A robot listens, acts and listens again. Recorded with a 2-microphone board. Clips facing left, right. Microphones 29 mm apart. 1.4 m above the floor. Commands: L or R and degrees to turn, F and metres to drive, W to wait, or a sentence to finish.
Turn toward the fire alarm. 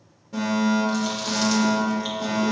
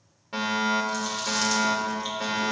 R55
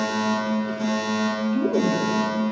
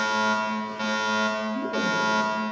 R60
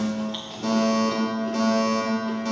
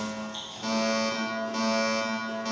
R10
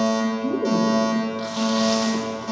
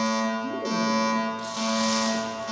Facing the fire alarm, 2 to 4 m away.